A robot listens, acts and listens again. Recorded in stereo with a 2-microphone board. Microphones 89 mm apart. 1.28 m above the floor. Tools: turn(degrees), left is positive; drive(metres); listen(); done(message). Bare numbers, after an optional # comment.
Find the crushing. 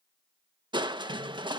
# The crushing: about 65° right or 115° right.
turn(-65)
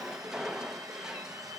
# So it is at 10° right.
turn(-10)
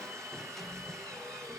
done("Found it: crushing, straight ahead.")